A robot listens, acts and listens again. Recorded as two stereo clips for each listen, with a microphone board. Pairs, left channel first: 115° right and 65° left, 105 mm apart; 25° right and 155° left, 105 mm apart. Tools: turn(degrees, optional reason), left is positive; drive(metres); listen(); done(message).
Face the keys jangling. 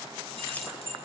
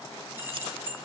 turn(degrees=-135, reason="The keys jangling: 135° right.")
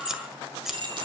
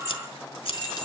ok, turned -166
turn(degrees=25, reason="The keys jangling is now 25° left.")
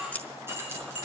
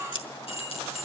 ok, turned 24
done("Facing the keys jangling.")